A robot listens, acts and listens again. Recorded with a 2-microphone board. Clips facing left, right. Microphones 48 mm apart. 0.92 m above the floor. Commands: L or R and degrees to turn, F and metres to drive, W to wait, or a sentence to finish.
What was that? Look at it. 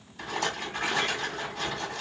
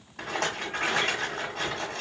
R55
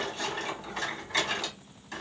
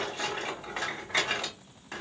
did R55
R25
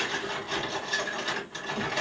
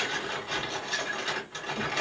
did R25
Found it: a rattle, straight ahead, 1 to 2 m away.